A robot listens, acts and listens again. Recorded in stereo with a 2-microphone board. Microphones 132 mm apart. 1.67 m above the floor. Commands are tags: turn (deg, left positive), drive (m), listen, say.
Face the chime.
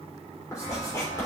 <turn deg="55"/>
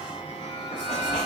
<turn deg="60"/>
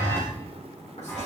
<turn deg="20"/>
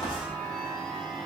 <say>Found it: a chime, straight ahead, 2 to 4 m away.</say>